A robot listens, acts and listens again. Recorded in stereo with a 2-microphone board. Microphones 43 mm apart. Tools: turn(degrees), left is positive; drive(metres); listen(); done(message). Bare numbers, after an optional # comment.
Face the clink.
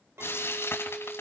turn(-90)
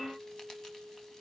done("Facing the clink.")